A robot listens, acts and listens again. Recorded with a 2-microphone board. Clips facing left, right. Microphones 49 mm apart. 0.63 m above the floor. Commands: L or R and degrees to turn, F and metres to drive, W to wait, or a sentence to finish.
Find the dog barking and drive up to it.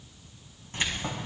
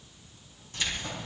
W
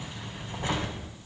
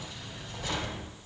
W
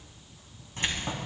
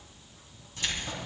I can't make out a dog barking, only keys jangling.